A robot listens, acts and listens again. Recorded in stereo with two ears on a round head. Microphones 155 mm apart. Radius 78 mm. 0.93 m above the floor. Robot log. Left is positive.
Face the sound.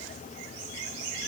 cmd idle
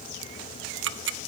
cmd yaw -90
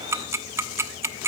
note: So it is at 15° right.
cmd yaw -15
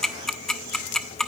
end: Found it: ticking, straight ahead.